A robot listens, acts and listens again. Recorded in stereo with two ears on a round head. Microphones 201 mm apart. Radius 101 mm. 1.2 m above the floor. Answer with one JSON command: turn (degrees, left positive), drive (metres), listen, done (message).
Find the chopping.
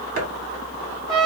{"turn": -40}
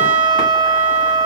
{"listen": true}
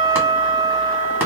{"listen": true}
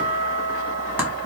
{"done": "I heard chopping, but can't make it out now. It was about straight ahead or 100° right."}